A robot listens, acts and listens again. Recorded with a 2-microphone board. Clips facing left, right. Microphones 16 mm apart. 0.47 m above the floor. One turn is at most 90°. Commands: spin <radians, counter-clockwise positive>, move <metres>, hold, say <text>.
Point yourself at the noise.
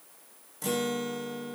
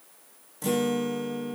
spin 0.52
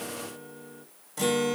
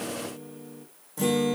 spin 1.57
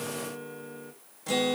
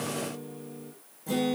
spin 1.22
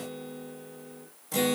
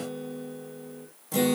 spin 0.26
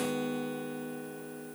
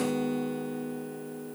say Found it: a guitar, straight ahead.